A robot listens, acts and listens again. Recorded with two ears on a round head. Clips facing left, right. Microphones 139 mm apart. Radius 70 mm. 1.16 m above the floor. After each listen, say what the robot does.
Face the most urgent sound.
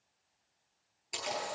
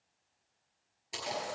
Keep listening.
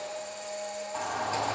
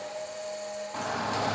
Turn 60° right.
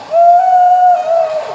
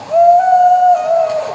Found it: a shout, straight ahead.